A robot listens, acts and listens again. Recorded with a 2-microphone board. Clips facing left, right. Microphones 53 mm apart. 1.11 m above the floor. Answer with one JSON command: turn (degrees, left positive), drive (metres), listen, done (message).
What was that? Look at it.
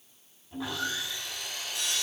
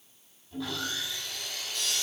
{"turn": 20}
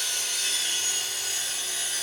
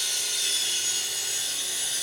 {"turn": 140}
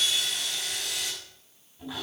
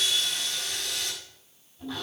{"turn": 10}
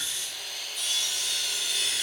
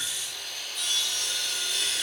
{"done": "Found it: sawing, straight ahead, over 4 m away."}